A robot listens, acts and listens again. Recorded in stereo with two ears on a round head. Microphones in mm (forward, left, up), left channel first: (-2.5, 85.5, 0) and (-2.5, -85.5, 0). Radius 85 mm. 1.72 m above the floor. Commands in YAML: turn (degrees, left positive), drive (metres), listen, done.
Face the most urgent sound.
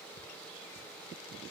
listen: true
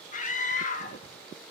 turn: 40
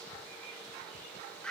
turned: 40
done: "Facing the scream."